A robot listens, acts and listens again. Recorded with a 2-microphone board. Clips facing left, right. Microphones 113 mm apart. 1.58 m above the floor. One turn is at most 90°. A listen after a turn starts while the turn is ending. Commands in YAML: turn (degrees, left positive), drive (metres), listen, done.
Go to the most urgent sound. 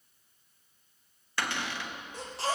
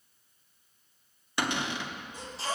turn: 60
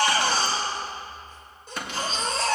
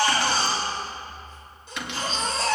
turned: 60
turn: 50
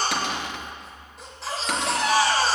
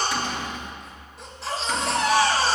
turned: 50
drive: 1.0
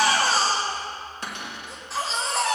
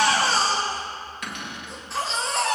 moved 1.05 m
drive: 1.0
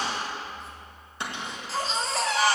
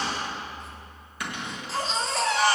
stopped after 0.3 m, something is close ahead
done: "I am next to the baby crying."